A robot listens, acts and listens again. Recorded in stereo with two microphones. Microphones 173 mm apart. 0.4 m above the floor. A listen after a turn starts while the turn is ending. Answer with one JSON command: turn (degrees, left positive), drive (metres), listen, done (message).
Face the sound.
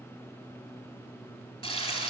{"turn": 35}
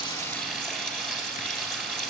{"done": "Found it: frying, straight ahead, 2 to 4 m away."}